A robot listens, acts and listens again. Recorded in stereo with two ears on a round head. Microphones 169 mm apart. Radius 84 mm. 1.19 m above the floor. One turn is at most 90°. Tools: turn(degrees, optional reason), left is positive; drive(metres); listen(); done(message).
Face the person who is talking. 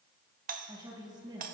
turn(degrees=-25, reason="The woman speaking: about 25° right or 155° right.")
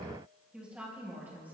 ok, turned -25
turn(degrees=-30)
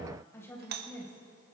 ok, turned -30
turn(degrees=10, reason="So it is at 10° left.")
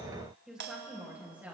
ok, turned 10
turn(degrees=-10, reason="The woman speaking is now 10° right.")
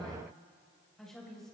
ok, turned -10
done("Facing the woman speaking.")